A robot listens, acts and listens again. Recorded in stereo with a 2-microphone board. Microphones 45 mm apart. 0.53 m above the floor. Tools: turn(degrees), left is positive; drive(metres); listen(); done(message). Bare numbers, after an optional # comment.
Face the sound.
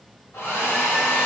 # The hair dryer: about 70° left or 110° left.
turn(70)
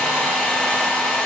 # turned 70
# So it is at 10° left.
turn(10)
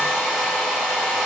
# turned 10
done("Facing the hair dryer, 1 to 2 m away.")